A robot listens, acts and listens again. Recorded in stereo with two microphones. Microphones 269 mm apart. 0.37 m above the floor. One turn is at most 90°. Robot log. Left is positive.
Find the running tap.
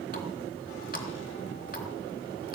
note: The running tap: about 35° left or 145° left.
cmd yaw +35
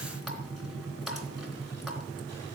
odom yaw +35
end: Found it: a running tap, straight ahead.